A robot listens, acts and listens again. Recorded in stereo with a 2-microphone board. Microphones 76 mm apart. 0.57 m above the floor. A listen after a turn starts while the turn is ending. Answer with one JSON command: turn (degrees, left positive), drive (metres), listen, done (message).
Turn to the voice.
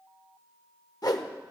{"listen": true}
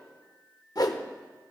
{"listen": true}
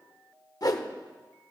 {"done": "I can't make out anyone speaking to turn to."}